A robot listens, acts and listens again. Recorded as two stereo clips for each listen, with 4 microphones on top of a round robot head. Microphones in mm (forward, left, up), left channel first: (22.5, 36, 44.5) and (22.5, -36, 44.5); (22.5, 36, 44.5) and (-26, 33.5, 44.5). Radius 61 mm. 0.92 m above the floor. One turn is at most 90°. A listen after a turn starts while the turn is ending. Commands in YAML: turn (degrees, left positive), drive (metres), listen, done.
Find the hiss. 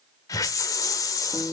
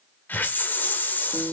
turn: 50
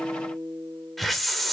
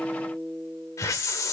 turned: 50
done: "Facing the hiss, 1 to 2 m away."